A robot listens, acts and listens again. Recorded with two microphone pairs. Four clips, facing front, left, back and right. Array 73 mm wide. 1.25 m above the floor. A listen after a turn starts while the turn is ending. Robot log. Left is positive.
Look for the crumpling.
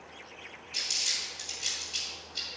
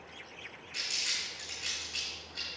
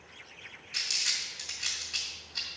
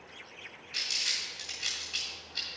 note: The crumpling: 160° right.
cmd yaw -160
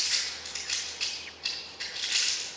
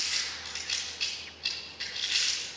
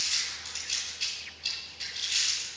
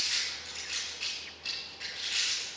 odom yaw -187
note: The crumpling is now 25° left.
cmd yaw +25
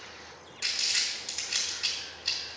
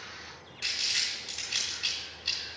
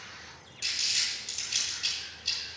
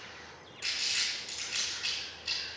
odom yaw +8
note: The crumpling is now 20° left.
cmd yaw +20
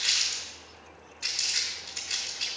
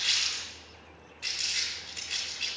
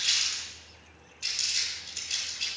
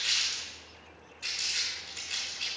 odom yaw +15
end: Found it: crumpling, straight ahead.